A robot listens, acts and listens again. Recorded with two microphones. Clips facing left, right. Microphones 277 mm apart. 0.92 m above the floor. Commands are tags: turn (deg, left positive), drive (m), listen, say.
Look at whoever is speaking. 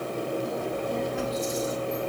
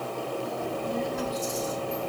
<turn deg="-40"/>
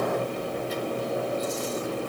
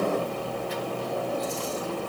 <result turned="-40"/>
<turn deg="-105"/>
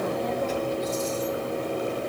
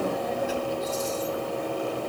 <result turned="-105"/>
<turn deg="-15"/>
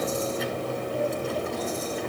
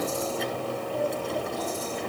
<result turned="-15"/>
<say>Found it: a child speaking, straight ahead, 2 to 4 m away.</say>